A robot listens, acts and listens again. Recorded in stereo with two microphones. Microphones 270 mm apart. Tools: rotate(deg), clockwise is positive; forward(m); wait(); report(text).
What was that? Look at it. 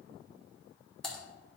rotate(-30)
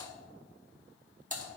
rotate(30)
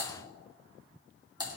rotate(15)
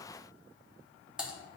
report("Found it: typing on a keyboard, straight ahead.")